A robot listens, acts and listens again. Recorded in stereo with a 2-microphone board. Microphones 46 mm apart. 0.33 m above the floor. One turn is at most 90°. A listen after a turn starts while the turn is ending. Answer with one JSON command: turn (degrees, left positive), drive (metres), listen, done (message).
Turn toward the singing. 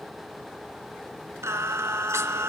{"turn": -90}
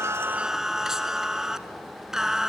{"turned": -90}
{"turn": -10}
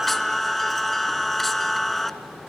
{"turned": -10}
{"done": "Found it: singing, straight ahead, under 1 m away."}